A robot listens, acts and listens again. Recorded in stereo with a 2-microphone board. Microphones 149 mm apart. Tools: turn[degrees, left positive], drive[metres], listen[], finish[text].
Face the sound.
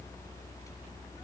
Action: listen[]
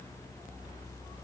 Action: listen[]
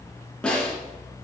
Action: turn[30]
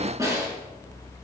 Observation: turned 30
Thought: So it is at 25° right.
Action: turn[-25]
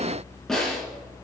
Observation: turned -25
Action: finish[Facing the snare drum.]